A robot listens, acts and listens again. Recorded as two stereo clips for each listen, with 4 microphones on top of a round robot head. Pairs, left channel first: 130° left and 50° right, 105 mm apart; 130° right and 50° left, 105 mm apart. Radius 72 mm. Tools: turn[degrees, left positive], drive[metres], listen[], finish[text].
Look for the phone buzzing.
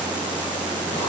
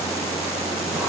Action: listen[]
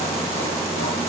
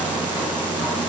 Action: listen[]
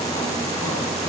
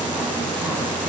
Action: finish[I can't make out a phone buzzing.]